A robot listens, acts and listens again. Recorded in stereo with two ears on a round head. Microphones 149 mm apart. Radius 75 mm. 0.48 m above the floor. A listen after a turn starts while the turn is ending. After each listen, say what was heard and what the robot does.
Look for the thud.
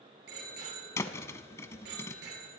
The thud: about 15° left or 165° left. Turn 15° left.
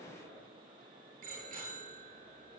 Keep listening.
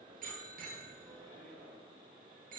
I heard a thud, but can't make it out now. It was about straight ahead or 150° left.